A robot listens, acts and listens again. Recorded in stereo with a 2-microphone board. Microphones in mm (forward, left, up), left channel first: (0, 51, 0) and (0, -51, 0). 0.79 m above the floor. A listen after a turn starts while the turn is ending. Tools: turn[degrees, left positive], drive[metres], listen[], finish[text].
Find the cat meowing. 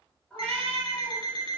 Action: turn[30]
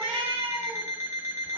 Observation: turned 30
Thought: So it is at 160° left.
Action: turn[160]
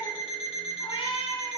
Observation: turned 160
Thought: The cat meowing is now 50° left.
Action: turn[50]
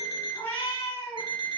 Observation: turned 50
Thought: The cat meowing is now 25° left.
Action: turn[25]
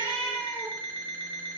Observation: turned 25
Action: finish[Found it: a cat meowing, straight ahead, 2 to 4 m away.]